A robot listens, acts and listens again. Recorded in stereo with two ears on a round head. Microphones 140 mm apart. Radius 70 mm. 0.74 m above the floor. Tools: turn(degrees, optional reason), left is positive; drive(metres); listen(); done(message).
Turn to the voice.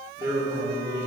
turn(degrees=-30, reason="The man speaking: about 30° right or 150° right.")
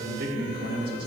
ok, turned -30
turn(degrees=-110, reason="So it is at 110° right.")
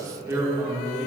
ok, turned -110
done("Found it: a man speaking, straight ahead, 1 to 2 m away.")